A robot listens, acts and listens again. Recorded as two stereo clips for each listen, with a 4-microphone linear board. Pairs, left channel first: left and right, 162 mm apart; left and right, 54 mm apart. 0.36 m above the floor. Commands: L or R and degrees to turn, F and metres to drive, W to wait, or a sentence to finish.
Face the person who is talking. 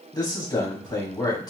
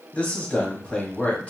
L25
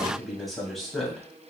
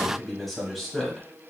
Found it: a man speaking, straight ahead.